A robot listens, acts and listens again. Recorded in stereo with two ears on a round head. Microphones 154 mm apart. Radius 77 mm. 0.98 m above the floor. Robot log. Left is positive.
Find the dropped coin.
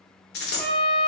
note: The dropped coin: about 70° left or 110° left.
cmd yaw +70
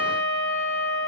cmd idle
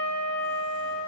end: I heard a dropped coin, but can't make it out now. It was about straight ahead or 40° left.